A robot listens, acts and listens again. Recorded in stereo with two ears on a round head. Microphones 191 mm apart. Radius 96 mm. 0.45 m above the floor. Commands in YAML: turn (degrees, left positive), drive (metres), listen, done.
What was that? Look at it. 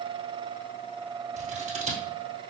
turn: -35
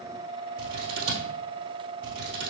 turn: -110
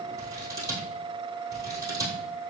turn: -15
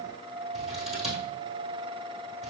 done: "Facing the scissors, 1 to 2 m away."